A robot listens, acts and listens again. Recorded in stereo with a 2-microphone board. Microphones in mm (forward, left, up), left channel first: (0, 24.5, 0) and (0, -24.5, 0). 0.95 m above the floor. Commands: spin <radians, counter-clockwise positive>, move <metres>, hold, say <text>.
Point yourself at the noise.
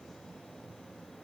hold
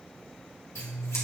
spin 1.13
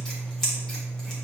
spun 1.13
spin 0.17
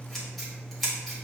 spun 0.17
say Facing the scissors, 2 to 4 m away.